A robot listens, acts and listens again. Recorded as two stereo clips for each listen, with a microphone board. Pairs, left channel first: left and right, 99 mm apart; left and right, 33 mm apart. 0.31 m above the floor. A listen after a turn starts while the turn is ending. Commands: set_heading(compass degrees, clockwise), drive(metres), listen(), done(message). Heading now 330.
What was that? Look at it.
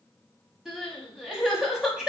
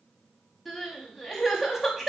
set_heading(0)
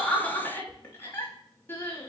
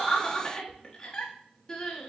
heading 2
set_heading(337)
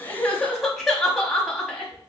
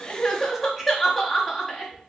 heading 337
done("Found it: crying, straight ahead, under 1 m away.")